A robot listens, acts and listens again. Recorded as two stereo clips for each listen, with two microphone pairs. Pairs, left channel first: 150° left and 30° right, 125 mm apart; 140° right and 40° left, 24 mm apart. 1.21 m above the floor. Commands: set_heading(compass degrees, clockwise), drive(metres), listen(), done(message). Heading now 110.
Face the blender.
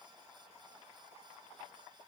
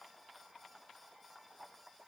listen()
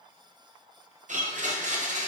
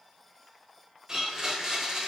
set_heading(140)
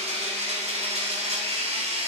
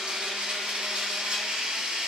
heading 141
done("Facing the blender.")